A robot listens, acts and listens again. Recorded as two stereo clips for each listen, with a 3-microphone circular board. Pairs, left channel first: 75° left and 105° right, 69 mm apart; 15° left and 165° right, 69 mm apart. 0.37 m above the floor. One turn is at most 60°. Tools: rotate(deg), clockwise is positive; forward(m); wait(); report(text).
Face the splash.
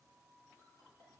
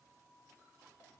wait()
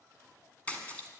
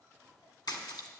report("Facing the splash.")